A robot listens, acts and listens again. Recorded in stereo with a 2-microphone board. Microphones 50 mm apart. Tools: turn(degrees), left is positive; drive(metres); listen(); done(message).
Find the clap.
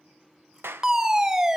turn(degrees=-55)
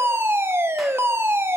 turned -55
listen()
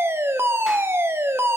listen()
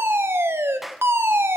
done("Found it: a clap, straight ahead.")